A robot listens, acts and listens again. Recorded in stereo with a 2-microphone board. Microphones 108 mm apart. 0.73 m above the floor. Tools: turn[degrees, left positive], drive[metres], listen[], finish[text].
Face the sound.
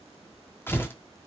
Thought: The tearing paper: about 20° left or 160° left.
Action: turn[20]
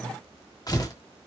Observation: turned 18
Thought: So it is at 145° left.
Action: turn[145]
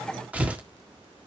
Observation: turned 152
Thought: The tearing paper is now 15° right.
Action: turn[-15]
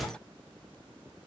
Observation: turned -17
Action: finish[Facing the tearing paper, 1 to 2 m away.]